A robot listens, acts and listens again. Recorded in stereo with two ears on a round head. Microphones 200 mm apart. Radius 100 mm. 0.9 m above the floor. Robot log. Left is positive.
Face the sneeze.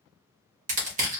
cmd idle
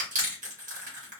cmd idle
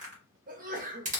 note: The sneeze: about 40° right or 140° right.
cmd yaw -40
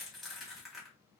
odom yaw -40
cmd idle
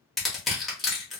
end: I heard a sneeze, but can't make it out now. It was about straight ahead or 100° right.